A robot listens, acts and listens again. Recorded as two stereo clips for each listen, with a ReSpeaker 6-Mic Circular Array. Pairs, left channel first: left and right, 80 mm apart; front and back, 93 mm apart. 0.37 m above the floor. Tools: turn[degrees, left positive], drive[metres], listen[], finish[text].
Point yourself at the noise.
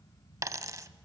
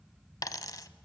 Thought: The dropped coin: 45° right.
Action: turn[-45]
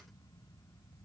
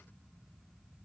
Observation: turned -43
Action: finish[Facing where the dropped coin came from. I can't hear it now.]